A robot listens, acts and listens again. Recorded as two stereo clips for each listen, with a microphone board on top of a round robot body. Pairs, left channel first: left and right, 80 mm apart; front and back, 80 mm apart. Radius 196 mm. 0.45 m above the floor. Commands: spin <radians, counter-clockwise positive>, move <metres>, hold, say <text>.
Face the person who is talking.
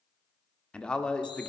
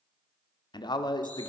spin 0.26
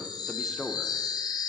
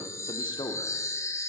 say Found it: a man speaking, straight ahead.